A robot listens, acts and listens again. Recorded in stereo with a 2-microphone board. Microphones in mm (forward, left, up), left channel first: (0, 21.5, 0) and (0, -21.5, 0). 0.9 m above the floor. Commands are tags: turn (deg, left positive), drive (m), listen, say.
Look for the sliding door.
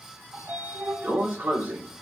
<turn deg="-50"/>
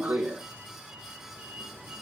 <turn deg="-75"/>
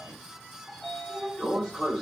<say>Facing the sliding door.</say>